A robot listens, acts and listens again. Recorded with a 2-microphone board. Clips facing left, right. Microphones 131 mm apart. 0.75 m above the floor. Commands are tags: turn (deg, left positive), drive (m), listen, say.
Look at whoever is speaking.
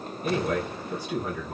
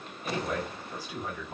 <turn deg="75"/>
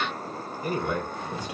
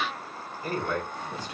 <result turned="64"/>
<turn deg="15"/>
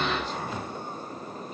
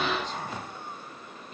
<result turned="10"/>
<listen/>
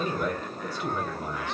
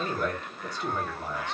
<say>Facing the man speaking, 2 to 4 m away.</say>